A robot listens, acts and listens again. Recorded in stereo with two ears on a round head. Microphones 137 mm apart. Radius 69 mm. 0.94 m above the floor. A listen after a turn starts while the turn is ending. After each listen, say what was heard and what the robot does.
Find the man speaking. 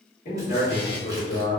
The man speaking: about 70° left or 110° left. Turn 70° left.
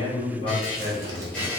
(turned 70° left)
So it is at 25° left. Turn 25° left.
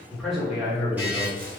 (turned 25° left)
The man speaking is now 10° right. Turn 10° right.
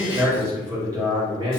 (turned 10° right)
The man speaking is now 30° right. Turn 30° right.
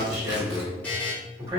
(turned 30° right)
The man speaking is now 25° right. Turn 25° right.
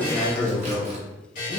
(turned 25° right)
The man speaking is now 15° left. Turn 15° left.
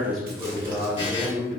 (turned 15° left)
Found it: a man speaking, straight ahead.